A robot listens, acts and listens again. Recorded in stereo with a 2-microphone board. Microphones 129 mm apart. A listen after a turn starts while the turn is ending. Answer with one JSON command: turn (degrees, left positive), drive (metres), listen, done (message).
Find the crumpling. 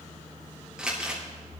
{"turn": -30}
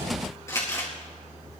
{"turn": 25}
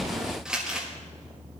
{"done": "Found it: crumpling, straight ahead."}